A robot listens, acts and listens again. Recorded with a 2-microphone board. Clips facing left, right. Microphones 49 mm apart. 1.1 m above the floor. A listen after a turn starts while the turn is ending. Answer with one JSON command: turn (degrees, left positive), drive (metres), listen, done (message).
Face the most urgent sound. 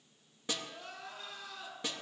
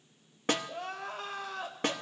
{"turn": -70}
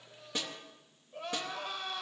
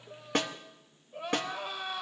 {"turn": -10}
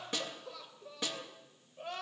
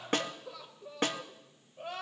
{"done": "Facing the crying."}